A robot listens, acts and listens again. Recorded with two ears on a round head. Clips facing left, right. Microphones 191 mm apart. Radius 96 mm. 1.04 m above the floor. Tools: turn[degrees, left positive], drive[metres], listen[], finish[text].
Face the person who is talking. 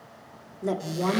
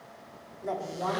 Thought: The woman speaking: about 45° left or 135° left.
Action: turn[45]
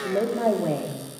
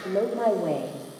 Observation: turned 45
Action: finish[Facing the woman speaking.]